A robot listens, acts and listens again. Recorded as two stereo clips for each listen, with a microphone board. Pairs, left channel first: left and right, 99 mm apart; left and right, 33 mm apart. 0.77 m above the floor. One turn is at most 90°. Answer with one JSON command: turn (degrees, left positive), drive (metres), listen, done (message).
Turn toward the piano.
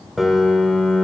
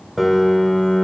{"turn": -30}
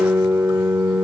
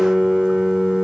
{"turn": -90}
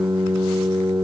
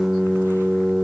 {"turn": -35}
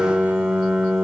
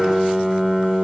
{"turn": -10}
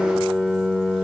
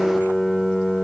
{"done": "Facing the piano."}